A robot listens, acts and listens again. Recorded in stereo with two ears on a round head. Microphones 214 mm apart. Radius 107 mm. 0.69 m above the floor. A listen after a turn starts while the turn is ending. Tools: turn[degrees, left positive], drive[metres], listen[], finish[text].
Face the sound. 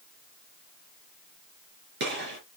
Thought: The gunshot: about 45° right or 135° right.
Action: turn[-45]
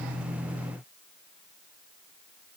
Action: listen[]
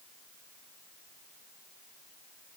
Action: finish[I heard a gunshot, but can't make it out now. It was about straight ahead or 90° right.]